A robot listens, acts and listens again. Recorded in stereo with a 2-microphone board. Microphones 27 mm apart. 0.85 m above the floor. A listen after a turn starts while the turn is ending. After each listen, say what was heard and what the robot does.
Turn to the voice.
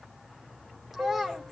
Turn 30° right.
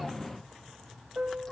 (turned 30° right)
Keep listening.
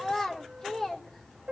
So it is at 20° left. Turn 20° left.
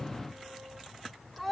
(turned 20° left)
Found it: a child speaking, straight ahead, 2 to 4 m away.